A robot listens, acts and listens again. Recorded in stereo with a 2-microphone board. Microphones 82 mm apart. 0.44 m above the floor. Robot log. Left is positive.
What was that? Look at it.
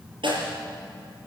cmd yaw -90
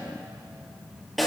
end: Found it: a snare drum, straight ahead.